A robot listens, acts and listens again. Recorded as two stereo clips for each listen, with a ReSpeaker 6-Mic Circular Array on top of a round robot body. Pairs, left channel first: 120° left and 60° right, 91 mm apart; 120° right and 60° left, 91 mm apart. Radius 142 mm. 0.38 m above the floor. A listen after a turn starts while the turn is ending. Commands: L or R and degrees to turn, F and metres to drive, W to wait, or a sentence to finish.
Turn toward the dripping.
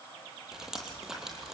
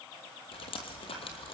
R145
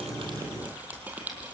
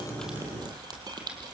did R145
L15
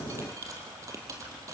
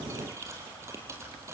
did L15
Facing the dripping, 2 to 4 m away.